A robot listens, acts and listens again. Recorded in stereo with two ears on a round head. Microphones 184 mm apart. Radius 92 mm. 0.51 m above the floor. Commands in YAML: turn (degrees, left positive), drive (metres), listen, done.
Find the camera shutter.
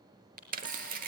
turn: -45
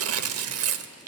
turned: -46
listen: true
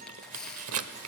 done: "Found it: a camera shutter, straight ahead."